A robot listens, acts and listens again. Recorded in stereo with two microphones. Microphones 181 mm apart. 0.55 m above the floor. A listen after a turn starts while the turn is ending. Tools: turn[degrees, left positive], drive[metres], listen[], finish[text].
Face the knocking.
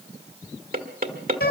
Thought: The knocking: about 60° right or 120° right.
Action: turn[-60]
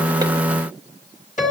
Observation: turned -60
Action: listen[]
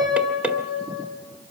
Thought: So it is at 10° right.
Action: turn[-10]
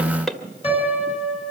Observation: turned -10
Action: finish[Found it: knocking, straight ahead, 1 to 2 m away.]